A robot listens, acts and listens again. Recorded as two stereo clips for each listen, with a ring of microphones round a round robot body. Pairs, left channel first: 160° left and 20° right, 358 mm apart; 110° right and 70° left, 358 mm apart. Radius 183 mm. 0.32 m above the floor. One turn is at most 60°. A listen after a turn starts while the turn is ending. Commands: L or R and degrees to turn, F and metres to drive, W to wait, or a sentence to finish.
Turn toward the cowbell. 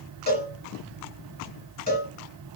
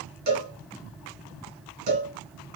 L60
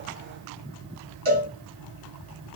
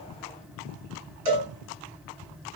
L45
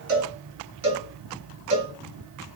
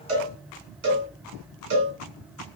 L10
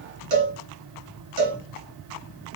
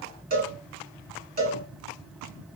Facing the cowbell, 2 to 4 m away.